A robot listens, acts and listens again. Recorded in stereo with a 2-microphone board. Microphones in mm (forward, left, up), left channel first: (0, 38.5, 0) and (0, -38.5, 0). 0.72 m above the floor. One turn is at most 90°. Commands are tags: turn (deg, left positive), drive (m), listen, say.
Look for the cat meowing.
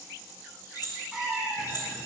<turn deg="-30"/>
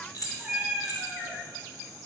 <turn deg="-30"/>
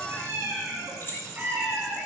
<turn deg="-90"/>
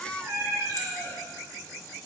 <turn deg="-60"/>
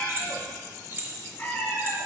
<turn deg="20"/>
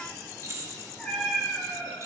<say>Found it: a cat meowing, straight ahead.</say>